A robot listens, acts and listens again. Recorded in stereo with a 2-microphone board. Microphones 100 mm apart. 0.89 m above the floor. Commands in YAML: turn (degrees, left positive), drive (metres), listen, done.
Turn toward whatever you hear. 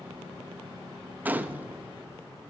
turn: -15
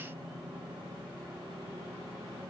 listen: true
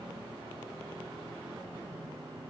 done: "I heard a gunshot, but can't make it out now. It was about straight ahead or 150° right."